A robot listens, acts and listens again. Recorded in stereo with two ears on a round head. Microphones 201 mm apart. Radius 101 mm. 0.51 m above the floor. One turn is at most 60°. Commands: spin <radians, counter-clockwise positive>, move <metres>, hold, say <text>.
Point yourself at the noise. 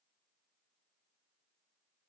hold
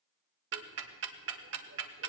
spin -0.96
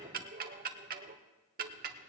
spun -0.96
spin -0.87
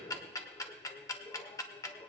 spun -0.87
spin 0.26
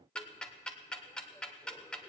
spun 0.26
say Found it: ticking, straight ahead.